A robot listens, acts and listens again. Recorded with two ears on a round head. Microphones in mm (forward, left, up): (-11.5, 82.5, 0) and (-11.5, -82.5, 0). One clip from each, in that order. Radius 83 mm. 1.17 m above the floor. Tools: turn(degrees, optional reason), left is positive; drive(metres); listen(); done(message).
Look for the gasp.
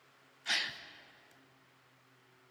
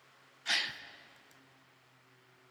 turn(degrees=-30)
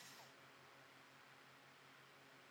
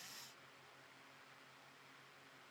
listen()
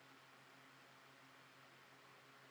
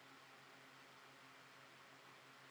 done("I heard a gasp, but can't make it out now. It was about 20° left or 140° right.")